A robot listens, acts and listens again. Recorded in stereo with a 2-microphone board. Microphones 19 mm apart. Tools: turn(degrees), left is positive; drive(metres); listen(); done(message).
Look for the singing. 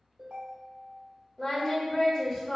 turn(degrees=-30)
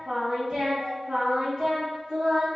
turn(degrees=-110)
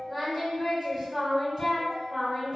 done("Found it: singing, straight ahead.")